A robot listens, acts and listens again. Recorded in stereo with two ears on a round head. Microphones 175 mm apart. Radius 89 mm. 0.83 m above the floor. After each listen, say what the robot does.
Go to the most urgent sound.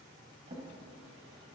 Keep listening.
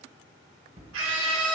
Turn 75° right.
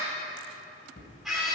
Drive 1.0 m forward.
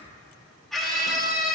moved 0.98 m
Drive 1.0 m forward.
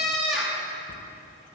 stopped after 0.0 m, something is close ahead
Arrived at the scream, straight ahead.